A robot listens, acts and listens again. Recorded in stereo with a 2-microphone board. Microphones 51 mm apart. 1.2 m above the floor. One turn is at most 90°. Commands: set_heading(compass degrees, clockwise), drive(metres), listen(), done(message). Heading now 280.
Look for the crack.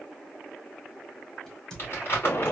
set_heading(250)
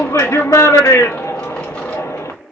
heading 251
listen()
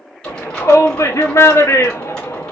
done("I heard a crack, but can't make it out now. It was about 15° right or 135° left.")